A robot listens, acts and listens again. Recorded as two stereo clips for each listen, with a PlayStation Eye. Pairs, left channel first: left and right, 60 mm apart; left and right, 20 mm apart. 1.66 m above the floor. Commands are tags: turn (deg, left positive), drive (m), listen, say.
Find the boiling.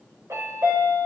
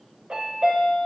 <listen/>
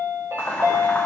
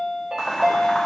<turn deg="30"/>
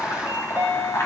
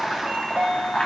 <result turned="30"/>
<turn deg="120"/>
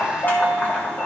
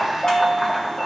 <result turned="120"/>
<turn deg="30"/>
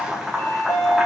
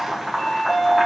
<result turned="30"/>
<turn deg="-10"/>
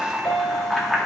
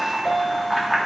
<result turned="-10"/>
<say>Facing the boiling, 1 to 2 m away.</say>